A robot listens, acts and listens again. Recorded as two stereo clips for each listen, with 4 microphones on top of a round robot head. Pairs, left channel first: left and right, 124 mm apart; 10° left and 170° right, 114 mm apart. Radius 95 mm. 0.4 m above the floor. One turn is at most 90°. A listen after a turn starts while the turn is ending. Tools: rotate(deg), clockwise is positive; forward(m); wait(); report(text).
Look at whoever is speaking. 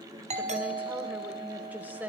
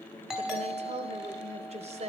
rotate(90)
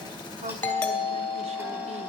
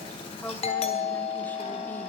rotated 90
rotate(80)
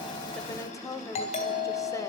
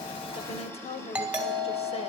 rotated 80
rotate(-30)
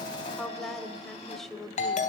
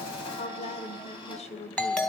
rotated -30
report("Found it: a woman speaking, straight ahead.")